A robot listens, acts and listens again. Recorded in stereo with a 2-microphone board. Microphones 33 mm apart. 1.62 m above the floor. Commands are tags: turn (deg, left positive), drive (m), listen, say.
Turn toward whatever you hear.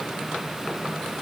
<listen/>
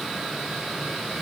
<listen/>
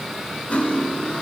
<turn deg="40"/>
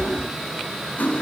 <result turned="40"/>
<turn deg="100"/>
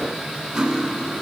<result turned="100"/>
<turn deg="-20"/>
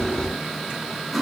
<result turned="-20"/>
<say>Found it: cutlery clinking, straight ahead.</say>